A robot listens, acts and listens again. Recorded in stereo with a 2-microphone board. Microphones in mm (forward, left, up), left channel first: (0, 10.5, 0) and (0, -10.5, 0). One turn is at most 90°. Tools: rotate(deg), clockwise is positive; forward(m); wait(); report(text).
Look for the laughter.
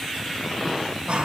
rotate(65)
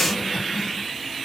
wait()
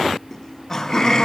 rotate(-30)
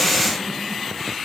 wait()
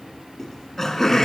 rotate(-20)
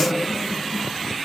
report("Found it: laughter, straight ahead.")